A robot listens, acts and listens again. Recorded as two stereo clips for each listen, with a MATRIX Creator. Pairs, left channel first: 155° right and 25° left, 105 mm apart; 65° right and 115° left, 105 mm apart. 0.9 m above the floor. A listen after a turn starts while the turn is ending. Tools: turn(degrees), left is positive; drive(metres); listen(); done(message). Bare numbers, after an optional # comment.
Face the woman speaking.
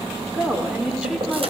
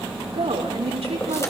# The woman speaking: 105° left.
turn(105)
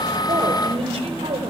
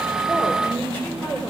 done("Found it: a woman speaking, straight ahead, 2 to 4 m away.")